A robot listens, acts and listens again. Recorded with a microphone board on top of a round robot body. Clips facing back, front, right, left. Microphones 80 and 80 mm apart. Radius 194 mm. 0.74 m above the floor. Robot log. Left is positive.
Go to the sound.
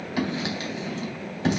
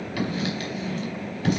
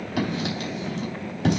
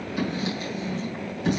note: The writing: 115° right.
cmd yaw -115
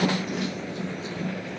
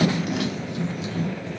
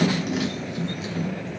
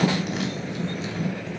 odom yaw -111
cmd fwd 1.0
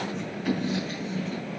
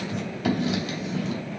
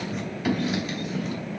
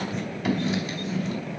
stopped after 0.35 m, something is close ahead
end: Something is in my way. I am facing the writing but have not reached it.